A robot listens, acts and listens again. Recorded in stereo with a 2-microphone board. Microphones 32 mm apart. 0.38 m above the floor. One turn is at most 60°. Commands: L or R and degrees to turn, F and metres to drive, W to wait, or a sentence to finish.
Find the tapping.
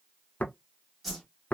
L60
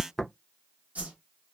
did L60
Found it: tapping, straight ahead, under 1 m away.